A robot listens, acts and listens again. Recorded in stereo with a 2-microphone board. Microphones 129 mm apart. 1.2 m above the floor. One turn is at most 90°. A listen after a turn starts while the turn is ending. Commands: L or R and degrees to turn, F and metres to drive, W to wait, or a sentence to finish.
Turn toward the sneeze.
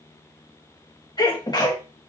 L30
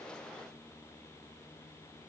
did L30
W
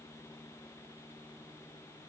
I heard a sneeze, but can't make it out now. It was about straight ahead or 120° left.